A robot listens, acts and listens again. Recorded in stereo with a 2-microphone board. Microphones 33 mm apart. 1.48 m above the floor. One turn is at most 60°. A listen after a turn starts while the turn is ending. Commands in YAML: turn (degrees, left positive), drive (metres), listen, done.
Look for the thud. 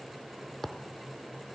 turn: 30
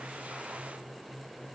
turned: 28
listen: true
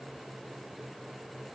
done: "I heard a thud, but can't make it out now. It was about 20° right or 145° left."